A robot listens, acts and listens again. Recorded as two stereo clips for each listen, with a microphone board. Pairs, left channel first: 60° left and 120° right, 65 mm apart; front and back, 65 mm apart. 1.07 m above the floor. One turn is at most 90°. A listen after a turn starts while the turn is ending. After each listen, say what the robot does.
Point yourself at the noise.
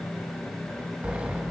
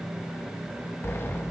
Turn 50° right.
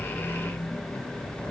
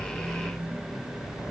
Keep listening.
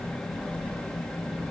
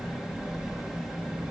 Facing the sliding door.